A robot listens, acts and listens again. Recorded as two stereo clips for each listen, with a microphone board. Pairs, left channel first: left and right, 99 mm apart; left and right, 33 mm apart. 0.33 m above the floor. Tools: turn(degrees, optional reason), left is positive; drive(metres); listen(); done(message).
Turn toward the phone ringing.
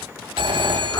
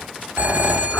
turn(degrees=-60, reason="The phone ringing: about 60° right or 120° right.")
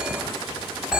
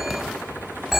turn(degrees=-10, reason="So it is at 10° right.")
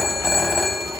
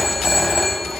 done("Found it: a phone ringing, straight ahead, 1 to 2 m away.")